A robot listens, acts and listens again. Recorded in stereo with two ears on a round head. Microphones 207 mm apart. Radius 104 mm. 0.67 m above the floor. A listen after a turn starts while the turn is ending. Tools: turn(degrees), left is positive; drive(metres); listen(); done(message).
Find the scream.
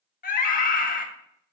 turn(degrees=35)
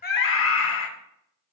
turn(degrees=100)
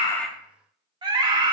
turn(degrees=-20)
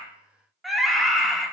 done("Facing the scream.")